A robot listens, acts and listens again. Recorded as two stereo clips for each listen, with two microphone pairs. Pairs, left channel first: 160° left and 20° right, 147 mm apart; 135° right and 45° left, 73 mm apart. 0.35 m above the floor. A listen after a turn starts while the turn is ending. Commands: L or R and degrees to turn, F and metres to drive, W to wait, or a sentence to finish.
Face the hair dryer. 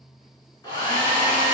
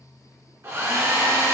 L100
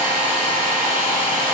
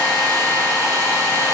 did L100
Facing the hair dryer.